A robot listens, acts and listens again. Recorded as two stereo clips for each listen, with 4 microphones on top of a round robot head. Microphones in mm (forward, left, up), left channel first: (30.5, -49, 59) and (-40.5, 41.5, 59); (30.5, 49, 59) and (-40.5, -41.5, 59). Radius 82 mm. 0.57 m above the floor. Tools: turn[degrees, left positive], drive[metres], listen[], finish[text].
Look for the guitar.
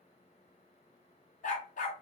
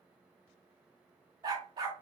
Action: listen[]
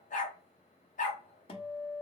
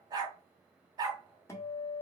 Thought: The guitar: 15° right.
Action: turn[-15]
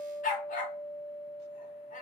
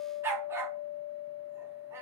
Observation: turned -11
Action: finish[Found it: a guitar, straight ahead, 1 to 2 m away.]